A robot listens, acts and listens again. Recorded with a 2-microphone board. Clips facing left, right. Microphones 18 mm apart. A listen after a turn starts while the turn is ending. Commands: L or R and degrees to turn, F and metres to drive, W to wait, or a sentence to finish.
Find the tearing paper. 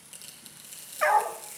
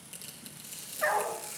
L30
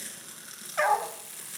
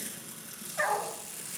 L145
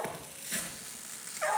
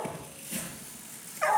L55
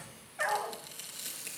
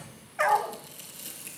L30
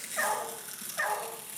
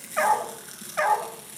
R10
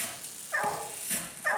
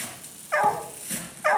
Found it: tearing paper, straight ahead, over 4 m away.